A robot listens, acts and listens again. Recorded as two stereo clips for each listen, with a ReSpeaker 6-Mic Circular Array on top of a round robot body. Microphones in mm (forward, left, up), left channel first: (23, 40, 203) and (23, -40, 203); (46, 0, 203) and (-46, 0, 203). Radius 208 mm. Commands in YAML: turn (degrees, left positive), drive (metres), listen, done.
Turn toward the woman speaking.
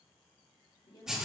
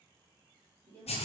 turn: 70
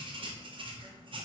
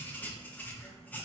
listen: true
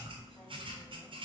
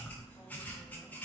listen: true
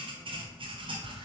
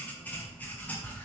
done: "I heard a woman speaking from this way, but can't make it out now."